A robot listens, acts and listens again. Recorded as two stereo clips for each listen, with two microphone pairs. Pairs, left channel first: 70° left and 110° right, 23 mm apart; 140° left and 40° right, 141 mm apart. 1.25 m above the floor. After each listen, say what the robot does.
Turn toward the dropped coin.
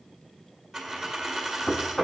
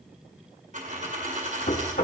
Turn 25° right.
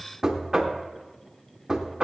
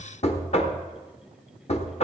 Facing where the dropped coin came from. I can't hear it now.